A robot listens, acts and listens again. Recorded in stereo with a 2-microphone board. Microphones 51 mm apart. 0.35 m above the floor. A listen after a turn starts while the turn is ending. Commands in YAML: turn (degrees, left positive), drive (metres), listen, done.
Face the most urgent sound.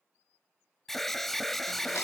turn: 30
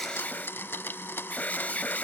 turn: 145
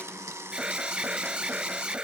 turn: -20
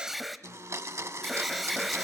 done: "Found it: an alarm, straight ahead, 1 to 2 m away."